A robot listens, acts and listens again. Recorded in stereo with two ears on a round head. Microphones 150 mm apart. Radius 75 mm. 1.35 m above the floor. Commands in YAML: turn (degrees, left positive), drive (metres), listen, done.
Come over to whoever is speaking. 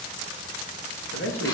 turn: 90
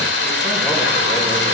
listen: true
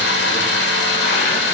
listen: true
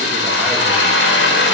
done: "I heard a man speaking from this way, but can't make it out now. I did not reach it."